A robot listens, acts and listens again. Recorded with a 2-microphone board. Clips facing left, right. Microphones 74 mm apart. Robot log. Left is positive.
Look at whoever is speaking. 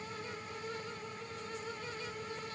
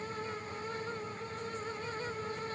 cmd idle
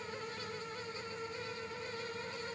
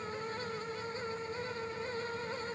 cmd idle
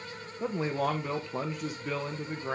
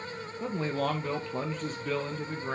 cmd yaw +30
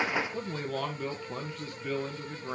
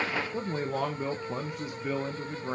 note: So it is at 20° right.
cmd yaw -20
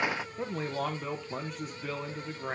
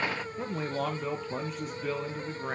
end: Facing the man speaking, under 1 m away.